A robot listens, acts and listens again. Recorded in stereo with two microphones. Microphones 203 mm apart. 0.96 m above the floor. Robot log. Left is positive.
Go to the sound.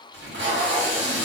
note: The tape being pulled: about 75° right or 105° right.
cmd yaw -75
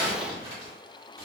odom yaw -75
note: So it is at 15° right.
cmd yaw -15
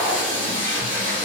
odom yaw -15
note: The tape being pulled is now 10° right.
cmd yaw -10
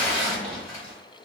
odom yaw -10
cmd fwd 1.0
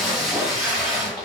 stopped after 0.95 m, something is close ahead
end: Arrived at the tape being pulled, straight ahead.